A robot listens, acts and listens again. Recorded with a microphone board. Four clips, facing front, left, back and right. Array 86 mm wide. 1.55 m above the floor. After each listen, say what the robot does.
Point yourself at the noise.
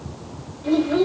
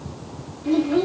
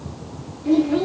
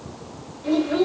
Turn 55° right.
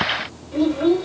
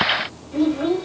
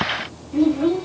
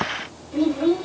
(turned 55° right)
Found it: a child speaking, straight ahead.